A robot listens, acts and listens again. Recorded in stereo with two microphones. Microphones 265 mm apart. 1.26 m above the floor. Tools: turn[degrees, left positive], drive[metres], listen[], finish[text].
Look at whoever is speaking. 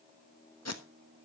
Action: listen[]
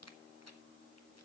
Action: listen[]
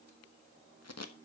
Action: finish[I can't make out anyone speaking, only tape being pulled.]